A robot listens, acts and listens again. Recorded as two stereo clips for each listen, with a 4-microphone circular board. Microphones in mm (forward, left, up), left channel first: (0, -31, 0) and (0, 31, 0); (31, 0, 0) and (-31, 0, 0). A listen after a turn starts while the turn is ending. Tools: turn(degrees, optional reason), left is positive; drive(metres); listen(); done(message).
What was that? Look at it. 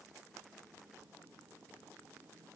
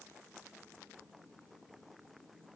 listen()
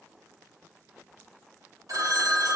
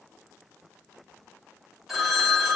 turn(degrees=95, reason="The phone ringing: 95° left.")
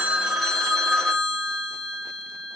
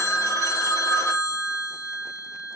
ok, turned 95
done("Found it: a phone ringing, straight ahead.")